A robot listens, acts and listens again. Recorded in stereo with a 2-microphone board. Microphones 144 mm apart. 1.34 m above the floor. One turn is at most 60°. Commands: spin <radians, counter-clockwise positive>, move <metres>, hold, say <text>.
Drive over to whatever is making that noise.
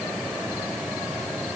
hold
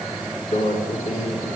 spin 1.05
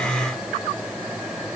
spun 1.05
hold
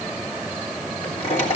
spin 0.79
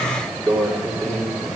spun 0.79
move 1.0
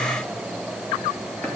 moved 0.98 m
hold
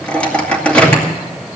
spin 0.17
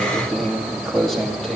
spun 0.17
move 1.0
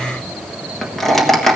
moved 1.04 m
move 1.0
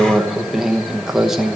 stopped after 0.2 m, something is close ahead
say I am next to the microwave.